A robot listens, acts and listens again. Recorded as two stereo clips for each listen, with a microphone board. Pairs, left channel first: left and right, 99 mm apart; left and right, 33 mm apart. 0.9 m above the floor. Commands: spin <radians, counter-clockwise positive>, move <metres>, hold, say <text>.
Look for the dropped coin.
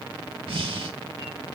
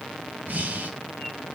hold
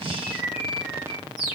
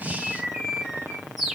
hold
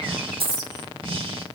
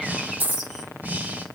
spin -1.05
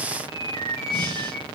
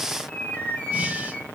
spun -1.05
hold
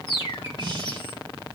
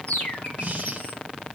say I heard a dropped coin, but can't make it out now. It was about straight ahead or 60° right.